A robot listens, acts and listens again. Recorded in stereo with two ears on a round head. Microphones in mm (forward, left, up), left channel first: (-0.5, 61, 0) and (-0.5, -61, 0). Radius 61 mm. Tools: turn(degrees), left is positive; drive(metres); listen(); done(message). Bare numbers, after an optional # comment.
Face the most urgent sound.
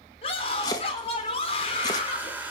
# The scream: about 45° left or 135° left.
turn(45)
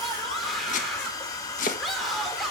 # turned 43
done("Found it: a scream, straight ahead.")